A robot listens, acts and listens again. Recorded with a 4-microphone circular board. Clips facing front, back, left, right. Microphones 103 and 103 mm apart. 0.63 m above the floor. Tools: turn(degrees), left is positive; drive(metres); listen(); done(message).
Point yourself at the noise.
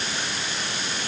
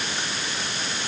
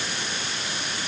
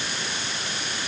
listen()
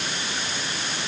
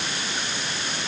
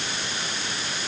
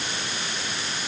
listen()
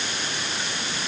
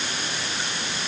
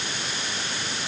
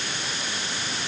done("I can't make out anything to turn to.")